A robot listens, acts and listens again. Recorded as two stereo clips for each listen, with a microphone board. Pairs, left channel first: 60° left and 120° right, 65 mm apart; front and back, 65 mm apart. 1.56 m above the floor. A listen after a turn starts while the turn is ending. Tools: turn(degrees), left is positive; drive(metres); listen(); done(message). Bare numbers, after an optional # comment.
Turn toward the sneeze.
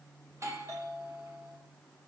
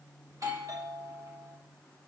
listen()
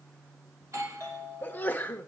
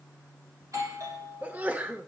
# The sneeze: 120° left.
turn(120)
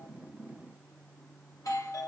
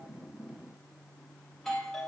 done("Facing where the sneeze came from. I can't hear it now.")